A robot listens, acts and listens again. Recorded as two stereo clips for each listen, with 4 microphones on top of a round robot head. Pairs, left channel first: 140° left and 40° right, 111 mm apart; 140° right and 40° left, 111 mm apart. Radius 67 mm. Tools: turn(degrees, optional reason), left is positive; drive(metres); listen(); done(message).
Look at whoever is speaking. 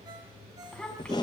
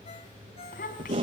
turn(degrees=-140, reason="The child speaking: 140° right.")
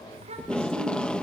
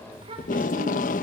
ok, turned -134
done("Found it: a child speaking, straight ahead, over 4 m away.")